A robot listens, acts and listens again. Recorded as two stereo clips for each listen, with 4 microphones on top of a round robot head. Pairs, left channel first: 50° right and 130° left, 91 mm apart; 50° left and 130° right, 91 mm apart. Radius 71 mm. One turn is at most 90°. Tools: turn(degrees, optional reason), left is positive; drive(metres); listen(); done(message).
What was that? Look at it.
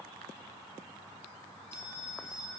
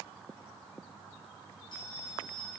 turn(degrees=15, reason="The bell: 15° left.")
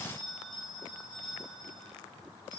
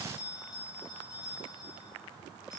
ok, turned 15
done("Facing the bell, over 4 m away.")